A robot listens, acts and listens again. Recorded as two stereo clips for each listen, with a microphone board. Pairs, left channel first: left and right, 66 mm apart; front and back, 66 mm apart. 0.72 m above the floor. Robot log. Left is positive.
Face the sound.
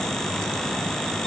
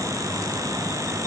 cmd idle
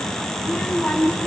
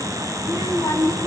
note: The child speaking: 20° left.
cmd yaw +20
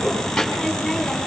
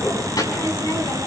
end: Found it: a child speaking, straight ahead.